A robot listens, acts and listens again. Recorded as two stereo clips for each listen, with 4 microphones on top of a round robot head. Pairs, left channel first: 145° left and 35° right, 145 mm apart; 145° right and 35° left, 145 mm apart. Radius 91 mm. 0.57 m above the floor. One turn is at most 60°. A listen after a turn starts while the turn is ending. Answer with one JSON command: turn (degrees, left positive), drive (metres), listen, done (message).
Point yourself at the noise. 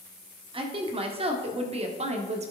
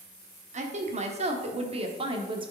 {"turn": -10}
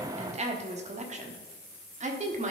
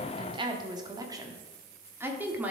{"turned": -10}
{"turn": -45}
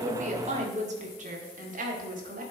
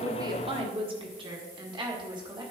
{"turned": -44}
{"turn": -20}
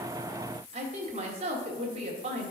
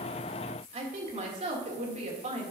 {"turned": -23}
{"done": "Facing the woman speaking, 1 to 2 m away."}